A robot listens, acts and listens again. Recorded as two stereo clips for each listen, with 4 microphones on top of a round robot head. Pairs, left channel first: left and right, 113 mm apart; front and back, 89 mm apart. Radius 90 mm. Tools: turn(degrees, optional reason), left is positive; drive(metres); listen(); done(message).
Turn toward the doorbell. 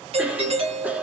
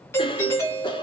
turn(degrees=-65, reason="The doorbell: 65° right.")
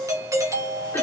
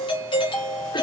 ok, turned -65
turn(degrees=-30, reason="The doorbell is now 30° right.")
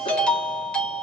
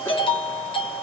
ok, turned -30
turn(degrees=10, reason="The doorbell is now 10° left.")
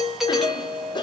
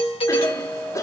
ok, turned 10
done("Found it: a doorbell, straight ahead, 2 to 4 m away.")